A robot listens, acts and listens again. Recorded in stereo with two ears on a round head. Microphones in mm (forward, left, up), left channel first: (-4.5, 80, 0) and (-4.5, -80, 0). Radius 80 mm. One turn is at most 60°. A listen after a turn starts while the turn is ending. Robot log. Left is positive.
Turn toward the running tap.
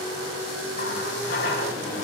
note: The running tap: about 60° left or 120° left.
cmd yaw +60
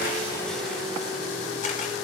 cmd idle
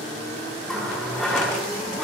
end: Found it: a running tap, straight ahead, over 4 m away.